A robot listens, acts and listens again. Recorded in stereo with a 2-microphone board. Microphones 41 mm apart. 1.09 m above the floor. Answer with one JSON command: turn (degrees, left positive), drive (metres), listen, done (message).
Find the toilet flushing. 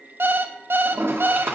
{"turn": -90}
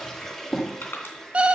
{"turn": 10}
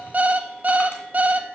{"listen": true}
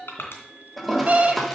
{"done": "Found it: a toilet flushing, straight ahead."}